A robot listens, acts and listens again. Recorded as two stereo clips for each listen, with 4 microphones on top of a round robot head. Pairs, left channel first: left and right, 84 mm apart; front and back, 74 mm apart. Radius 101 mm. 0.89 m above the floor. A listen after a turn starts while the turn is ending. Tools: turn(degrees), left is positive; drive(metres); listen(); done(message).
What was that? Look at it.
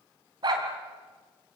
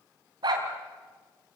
turn(degrees=-135)
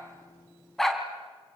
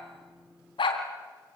done("Found it: a dog barking, straight ahead.")